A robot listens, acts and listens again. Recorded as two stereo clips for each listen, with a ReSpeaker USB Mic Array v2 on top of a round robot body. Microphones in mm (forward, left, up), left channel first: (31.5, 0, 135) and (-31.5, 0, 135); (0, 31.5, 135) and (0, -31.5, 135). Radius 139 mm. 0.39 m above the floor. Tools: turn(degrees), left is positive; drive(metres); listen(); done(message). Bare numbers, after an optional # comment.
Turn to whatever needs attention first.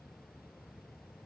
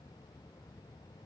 listen()
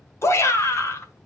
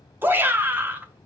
# The shout: 35° right.
turn(-35)
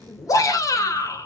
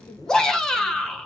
# The shout is now 10° left.
turn(10)
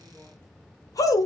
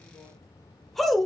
done("Found it: a shout, straight ahead.")